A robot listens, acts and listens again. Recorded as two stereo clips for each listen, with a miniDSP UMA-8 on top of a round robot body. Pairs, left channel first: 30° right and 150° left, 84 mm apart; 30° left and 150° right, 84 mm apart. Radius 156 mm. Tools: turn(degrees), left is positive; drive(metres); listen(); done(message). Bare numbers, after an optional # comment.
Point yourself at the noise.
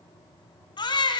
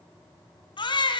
done("Found it: a baby crying, straight ahead.")